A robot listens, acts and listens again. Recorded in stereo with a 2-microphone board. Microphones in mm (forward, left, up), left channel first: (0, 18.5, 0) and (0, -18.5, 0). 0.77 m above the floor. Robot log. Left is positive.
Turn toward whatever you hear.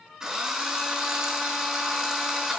note: The drill: about 20° right or 160° right.
cmd yaw -20
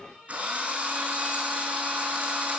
note: So it is at 140° right.
cmd yaw -140
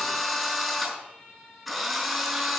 end: Facing the drill, over 4 m away.